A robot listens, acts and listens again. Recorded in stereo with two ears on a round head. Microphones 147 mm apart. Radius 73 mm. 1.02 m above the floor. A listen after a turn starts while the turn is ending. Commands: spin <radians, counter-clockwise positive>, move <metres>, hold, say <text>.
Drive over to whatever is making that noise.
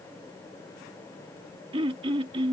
spin -0.61
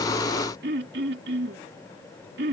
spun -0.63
spin -1.92
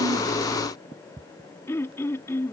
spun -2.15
spin 0.26
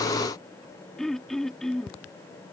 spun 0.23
move 1.0
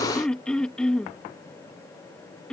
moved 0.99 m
move 1.0
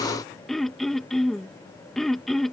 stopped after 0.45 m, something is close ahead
say Arrived at the throat clearing, straight ahead.